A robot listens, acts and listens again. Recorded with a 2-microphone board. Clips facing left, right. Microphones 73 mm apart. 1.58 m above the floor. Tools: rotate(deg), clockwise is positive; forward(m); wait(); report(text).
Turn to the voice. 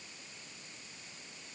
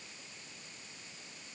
wait()
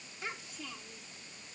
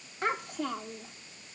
rotate(60)
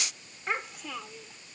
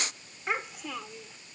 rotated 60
report("Facing the child speaking.")